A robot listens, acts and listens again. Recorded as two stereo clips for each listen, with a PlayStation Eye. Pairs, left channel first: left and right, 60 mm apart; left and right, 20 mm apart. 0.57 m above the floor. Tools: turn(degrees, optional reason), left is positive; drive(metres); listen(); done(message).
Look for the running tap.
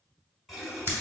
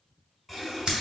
turn(degrees=30)
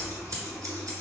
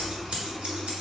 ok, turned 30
turn(degrees=150, reason="So it is at 150° left.")
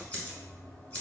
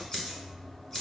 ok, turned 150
turn(degrees=15, reason="The running tap is now 15° left.")
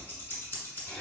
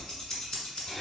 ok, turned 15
done("Facing the running tap.")